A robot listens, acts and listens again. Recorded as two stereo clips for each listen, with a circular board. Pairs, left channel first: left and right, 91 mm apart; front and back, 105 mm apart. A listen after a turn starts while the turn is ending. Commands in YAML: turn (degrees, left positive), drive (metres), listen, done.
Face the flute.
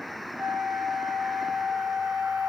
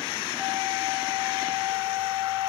turn: -125
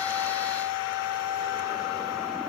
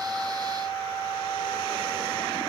turn: -40
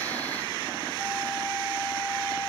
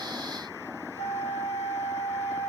done: "Found it: a flute, straight ahead."